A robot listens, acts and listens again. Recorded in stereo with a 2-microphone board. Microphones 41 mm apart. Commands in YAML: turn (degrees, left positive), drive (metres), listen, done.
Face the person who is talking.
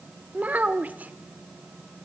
turn: -40
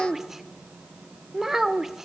turn: -10
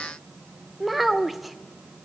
done: "Found it: a child speaking, straight ahead, 1 to 2 m away."